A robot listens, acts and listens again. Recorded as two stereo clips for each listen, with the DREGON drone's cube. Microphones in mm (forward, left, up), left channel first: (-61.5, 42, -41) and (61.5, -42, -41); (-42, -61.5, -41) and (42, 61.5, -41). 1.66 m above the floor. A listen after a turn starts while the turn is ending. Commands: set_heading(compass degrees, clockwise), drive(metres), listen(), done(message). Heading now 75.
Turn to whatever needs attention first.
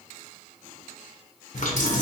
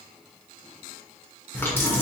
listen()
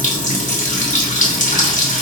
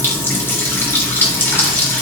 listen()
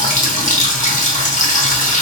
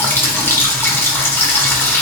done("I can't make out anything urgent to turn to.")